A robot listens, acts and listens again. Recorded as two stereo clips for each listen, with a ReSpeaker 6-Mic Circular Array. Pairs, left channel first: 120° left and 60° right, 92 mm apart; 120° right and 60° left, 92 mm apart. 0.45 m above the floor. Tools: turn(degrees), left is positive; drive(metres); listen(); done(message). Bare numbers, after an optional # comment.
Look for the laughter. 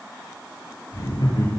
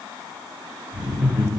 # The laughter: 140° left.
turn(140)
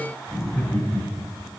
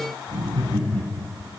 # The laughter is now 40° left.
turn(40)
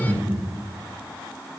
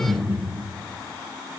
done("Facing the laughter.")